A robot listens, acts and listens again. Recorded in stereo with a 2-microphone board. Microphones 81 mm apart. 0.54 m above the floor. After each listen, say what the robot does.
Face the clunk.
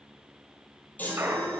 Turn 30° right.
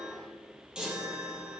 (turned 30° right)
Keep listening.
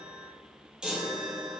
I heard a clunk, but can't make it out now. It was about straight ahead or 120° right.